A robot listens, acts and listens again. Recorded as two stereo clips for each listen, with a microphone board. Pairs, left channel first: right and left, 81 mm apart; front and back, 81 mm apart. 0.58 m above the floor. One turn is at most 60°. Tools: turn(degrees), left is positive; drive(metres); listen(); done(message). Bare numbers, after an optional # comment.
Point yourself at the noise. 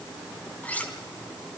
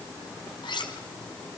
# The cutlery clinking: 20° right.
turn(-20)
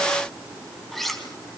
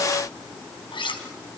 done("Found it: cutlery clinking, straight ahead.")